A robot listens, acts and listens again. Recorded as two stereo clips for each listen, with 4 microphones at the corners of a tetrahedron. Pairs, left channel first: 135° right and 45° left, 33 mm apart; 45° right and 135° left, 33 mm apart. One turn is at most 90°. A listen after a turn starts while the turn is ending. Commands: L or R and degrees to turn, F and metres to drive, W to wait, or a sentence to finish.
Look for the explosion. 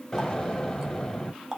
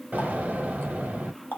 L90
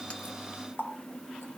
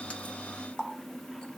L70
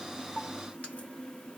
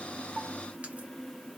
Facing where the explosion came from. I can't hear it now.